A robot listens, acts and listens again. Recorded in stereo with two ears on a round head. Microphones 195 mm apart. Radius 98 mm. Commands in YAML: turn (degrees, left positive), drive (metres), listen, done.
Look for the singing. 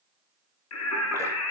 turn: 90
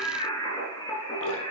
turn: 20
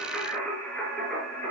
done: "Facing the singing."